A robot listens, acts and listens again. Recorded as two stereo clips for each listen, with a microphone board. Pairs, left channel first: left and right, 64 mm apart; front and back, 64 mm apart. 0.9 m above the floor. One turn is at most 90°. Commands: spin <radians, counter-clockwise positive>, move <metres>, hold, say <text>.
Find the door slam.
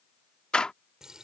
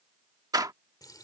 spin 1.57
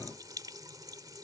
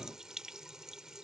spin 1.31
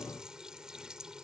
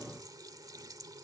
say Facing where the door slam came from. I can't hear it now.